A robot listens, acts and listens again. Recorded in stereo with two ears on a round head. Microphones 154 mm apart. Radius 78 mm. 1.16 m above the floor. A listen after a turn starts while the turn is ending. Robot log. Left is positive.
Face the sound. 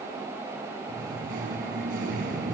note: The singing: about 50° right or 130° right.
cmd yaw -50
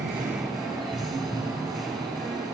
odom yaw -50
end: Found it: singing, straight ahead.